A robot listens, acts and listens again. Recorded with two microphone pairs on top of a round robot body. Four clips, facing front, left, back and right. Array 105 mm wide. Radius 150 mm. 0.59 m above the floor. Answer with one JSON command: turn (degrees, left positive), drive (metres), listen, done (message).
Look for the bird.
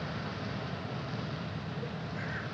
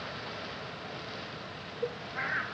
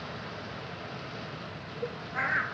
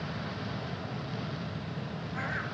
{"turn": 180}
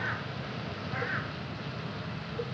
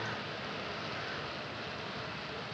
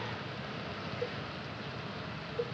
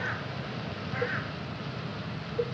{"turn": -40}
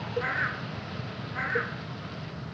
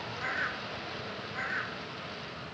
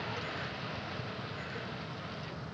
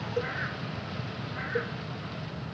{"turn": 15}
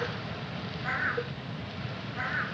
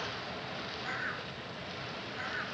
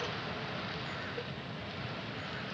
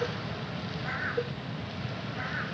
{"done": "Found it: a bird, straight ahead."}